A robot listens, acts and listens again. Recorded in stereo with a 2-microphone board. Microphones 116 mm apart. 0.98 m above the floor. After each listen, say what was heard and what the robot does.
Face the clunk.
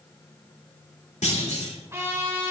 Turn 90° left.
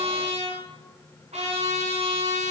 Facing where the clunk came from. I can't hear it now.